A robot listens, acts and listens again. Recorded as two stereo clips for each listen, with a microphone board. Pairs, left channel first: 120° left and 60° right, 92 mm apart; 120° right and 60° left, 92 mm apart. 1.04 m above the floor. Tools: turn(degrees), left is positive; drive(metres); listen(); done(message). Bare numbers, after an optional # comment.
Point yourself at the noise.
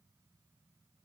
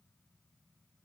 listen()
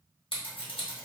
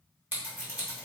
# The scissors: 130° left.
turn(130)
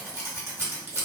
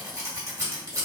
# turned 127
done("Found it: scissors, straight ahead.")